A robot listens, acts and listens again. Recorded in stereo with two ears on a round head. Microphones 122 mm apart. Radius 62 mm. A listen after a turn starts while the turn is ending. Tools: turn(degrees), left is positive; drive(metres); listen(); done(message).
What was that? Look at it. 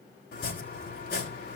turn(degrees=90)
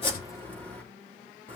turn(degrees=10)
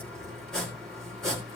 done("Found it: chopping, straight ahead, 2 to 4 m away.")